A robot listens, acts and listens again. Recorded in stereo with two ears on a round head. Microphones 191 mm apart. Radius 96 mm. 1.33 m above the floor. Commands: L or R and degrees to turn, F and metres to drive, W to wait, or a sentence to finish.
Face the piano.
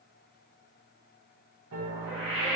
R90
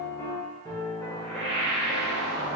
L10
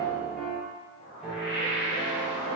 Facing the piano.